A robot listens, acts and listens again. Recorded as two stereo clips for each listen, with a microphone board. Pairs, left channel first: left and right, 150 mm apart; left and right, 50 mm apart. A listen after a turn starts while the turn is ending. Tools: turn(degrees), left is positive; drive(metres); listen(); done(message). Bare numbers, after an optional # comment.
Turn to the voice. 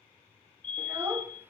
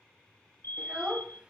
turn(-30)
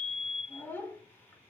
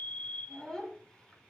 # So it is at 15° left.
turn(15)
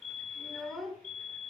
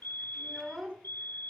done("Facing the child speaking.")